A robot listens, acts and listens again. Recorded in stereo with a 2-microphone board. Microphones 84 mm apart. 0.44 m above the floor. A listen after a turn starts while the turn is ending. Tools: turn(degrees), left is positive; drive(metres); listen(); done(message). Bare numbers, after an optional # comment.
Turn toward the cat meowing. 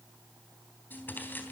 listen()
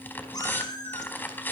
# The cat meowing: about 50° left or 130° left.
turn(50)
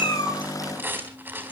listen()
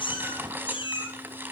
# So it is at 70° left.
turn(70)
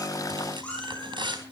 # The cat meowing is now 15° left.
turn(15)
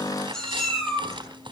done("Found it: a cat meowing, straight ahead, over 4 m away.")